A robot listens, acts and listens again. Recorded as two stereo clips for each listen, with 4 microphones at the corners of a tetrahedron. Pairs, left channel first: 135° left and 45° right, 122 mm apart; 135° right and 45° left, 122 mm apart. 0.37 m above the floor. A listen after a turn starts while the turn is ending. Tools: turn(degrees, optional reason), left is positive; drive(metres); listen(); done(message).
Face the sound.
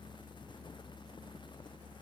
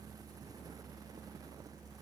listen()
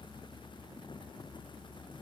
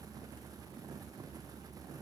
listen()
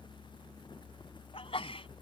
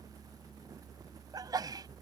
turn(degrees=100, reason="The sneeze: 100° left.")
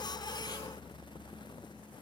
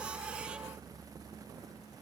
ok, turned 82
turn(degrees=20, reason="Nothing new. It was at 20° left.")
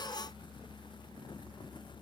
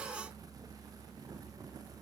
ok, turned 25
done("I heard a sneeze from this way, but can't make it out now.")